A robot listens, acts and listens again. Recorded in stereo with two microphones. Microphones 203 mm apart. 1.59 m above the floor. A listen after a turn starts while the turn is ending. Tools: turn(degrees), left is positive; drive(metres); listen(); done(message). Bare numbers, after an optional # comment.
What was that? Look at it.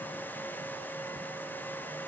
listen()
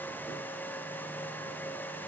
listen()
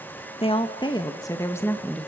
turn(30)
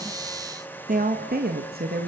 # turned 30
# So it is at 50° right.
turn(-50)
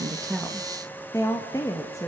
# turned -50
# The woman speaking is now 15° left.
turn(15)
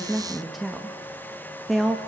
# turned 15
done("Facing the woman speaking.")